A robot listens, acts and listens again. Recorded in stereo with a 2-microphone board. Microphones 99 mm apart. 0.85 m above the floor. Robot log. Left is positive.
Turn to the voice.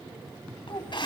note: The child speaking: about 55° left or 125° left.
cmd yaw +55
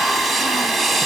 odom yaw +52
cmd idle
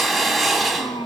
note: So it is at 65° left.
cmd yaw +65
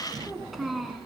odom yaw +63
end: Found it: a child speaking, straight ahead.